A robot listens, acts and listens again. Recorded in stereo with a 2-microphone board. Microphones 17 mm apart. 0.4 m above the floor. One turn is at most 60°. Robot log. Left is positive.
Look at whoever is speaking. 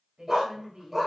note: The woman speaking: about 50° right or 130° right.
cmd yaw -50
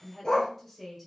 end: Facing the woman speaking, 1 to 2 m away.